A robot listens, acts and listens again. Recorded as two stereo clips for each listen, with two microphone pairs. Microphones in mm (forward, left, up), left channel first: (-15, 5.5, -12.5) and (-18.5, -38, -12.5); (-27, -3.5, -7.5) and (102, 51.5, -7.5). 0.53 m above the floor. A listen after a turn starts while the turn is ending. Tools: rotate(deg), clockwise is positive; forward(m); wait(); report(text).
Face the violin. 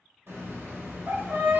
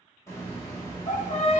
rotate(130)
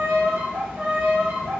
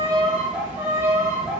rotate(45)
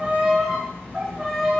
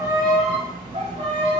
rotate(10)
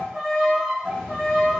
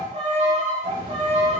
report("Found it: a violin, straight ahead.")